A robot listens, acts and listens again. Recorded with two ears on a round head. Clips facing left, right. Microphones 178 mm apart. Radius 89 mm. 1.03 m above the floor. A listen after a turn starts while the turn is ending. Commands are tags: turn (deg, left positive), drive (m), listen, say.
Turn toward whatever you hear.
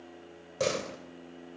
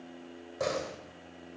<turn deg="40"/>
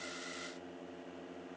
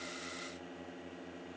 <listen/>
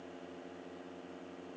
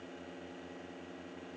<say>I heard a door slam, but can't make it out now. It was about straight ahead or 100° left.</say>